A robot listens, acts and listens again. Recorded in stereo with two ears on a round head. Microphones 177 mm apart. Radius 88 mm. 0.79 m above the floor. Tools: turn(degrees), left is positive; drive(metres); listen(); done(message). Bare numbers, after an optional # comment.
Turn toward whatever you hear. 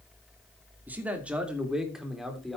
turn(30)
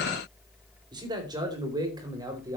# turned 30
# So it is at 20° right.
turn(-20)
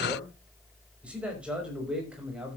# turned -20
done("Found it: a man speaking, straight ahead.")